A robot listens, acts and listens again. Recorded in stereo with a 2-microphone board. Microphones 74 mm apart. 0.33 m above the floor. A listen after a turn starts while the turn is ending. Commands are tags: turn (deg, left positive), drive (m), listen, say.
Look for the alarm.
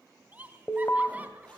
<turn deg="30"/>
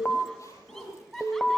<turn deg="10"/>
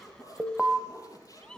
<say>Found it: an alarm, straight ahead, 1 to 2 m away.</say>